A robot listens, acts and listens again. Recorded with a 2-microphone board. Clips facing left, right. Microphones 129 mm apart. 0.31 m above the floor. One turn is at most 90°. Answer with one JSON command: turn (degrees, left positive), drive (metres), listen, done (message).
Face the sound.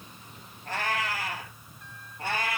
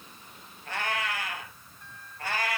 {"turn": 25}
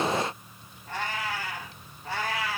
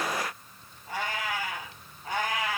{"turn": -20}
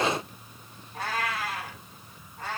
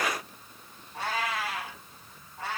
{"done": "Facing the cat meowing."}